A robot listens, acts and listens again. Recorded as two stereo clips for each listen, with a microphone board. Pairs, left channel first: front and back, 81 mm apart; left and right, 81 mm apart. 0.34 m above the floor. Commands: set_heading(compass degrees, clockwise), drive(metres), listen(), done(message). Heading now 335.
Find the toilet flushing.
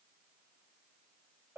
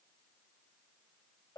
listen()
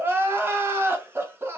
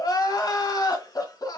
listen()
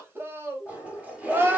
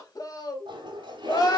set_heading(80)
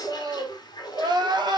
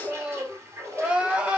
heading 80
set_heading(115)
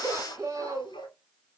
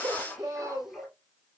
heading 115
done("Facing the toilet flushing.")